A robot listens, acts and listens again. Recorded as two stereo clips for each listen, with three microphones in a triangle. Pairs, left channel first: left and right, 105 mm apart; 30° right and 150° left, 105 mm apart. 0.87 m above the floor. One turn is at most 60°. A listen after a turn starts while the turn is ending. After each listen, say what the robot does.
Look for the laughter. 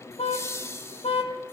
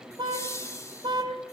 Turn 25° left.
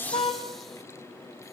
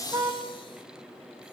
Keep listening.
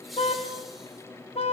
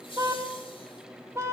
Keep listening.
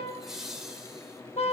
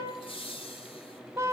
Facing the laughter, over 4 m away.